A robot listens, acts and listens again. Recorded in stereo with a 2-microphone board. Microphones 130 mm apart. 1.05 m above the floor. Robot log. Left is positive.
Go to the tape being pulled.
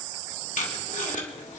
note: The tape being pulled: about 70° left or 110° left.
cmd yaw +70
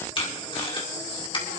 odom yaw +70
note: So it is at 40° left.
cmd yaw +40
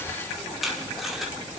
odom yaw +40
cmd fwd 1.0
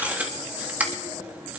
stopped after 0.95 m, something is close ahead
note: The tape being pulled is now 10° right.
cmd yaw -10
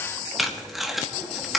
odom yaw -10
end: I am next to the tape being pulled.